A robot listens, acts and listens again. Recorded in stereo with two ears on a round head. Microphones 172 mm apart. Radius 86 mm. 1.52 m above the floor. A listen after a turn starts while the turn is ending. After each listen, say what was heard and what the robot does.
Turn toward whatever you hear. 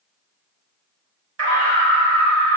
Turn 90° right.
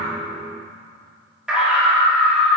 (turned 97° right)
Found it: a scream, straight ahead, 2 to 4 m away.